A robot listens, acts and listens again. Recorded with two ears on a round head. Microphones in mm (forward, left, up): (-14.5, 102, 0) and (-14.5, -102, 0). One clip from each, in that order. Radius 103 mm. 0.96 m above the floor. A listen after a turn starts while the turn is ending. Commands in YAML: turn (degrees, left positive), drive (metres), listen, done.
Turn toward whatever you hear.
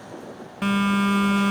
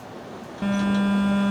turn: 60
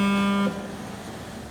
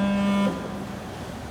turn: 10
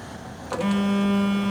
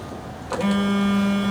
done: "Facing the phone buzzing."